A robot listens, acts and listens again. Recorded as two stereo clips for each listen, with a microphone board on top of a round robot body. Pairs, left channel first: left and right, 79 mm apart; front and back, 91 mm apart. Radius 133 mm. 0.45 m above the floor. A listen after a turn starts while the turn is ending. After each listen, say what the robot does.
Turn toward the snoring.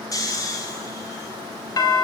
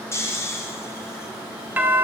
Turn 55° left.
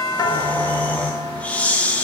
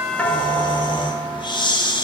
Turn 20° left.
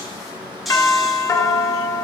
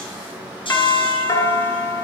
Facing the snoring.